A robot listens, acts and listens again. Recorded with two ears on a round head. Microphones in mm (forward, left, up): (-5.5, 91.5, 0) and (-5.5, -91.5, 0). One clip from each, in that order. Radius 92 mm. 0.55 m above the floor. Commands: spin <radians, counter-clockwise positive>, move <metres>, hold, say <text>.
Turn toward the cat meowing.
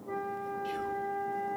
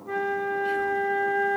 hold
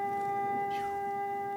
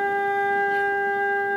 hold
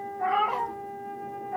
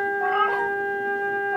spin 0.79
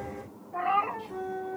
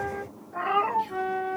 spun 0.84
say Facing the cat meowing.